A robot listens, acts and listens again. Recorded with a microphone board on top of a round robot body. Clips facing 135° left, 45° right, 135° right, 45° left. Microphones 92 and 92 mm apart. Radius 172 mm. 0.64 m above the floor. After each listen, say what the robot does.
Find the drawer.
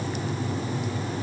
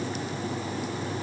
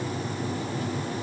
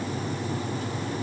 Keep listening.
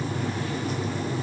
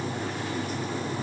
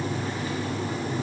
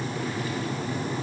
Keep listening.
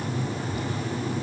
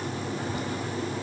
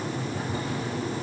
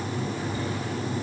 I can't make out a drawer to turn to.